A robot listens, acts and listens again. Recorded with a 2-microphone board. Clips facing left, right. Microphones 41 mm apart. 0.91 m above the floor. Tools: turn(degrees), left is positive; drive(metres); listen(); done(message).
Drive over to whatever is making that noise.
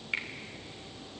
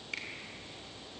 turn(degrees=30)
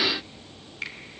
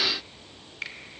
drive(metres=1.0)
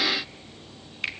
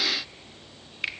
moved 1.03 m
drive(metres=1.0)
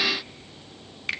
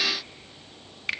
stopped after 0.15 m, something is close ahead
done("Arrived at the finger snap, straight ahead.")